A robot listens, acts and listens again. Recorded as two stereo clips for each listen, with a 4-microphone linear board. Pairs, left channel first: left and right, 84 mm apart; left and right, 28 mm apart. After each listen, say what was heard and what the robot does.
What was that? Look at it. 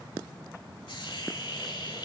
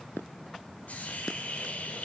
The hiss: about 70° left or 110° left. Turn 70° left.
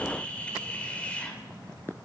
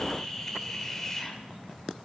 So it is at 15° left. Turn 15° left.
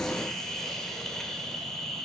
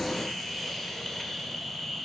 Found it: a hiss, straight ahead.